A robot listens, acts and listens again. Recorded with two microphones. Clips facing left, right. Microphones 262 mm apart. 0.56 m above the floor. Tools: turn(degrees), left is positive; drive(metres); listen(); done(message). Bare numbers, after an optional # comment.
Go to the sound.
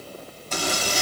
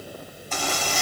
# The zipper: about 45° left or 135° left.
turn(45)
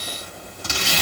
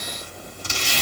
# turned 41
# So it is at 90° left.
turn(90)
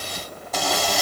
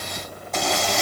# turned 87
drive(1.0)
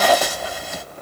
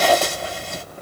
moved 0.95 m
drive(1.0)
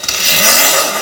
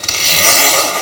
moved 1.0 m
# The zipper is now 15° left.
turn(15)
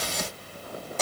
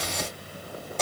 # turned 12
drive(1.0)
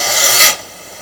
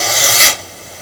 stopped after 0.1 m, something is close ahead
done("I am next to the zipper.")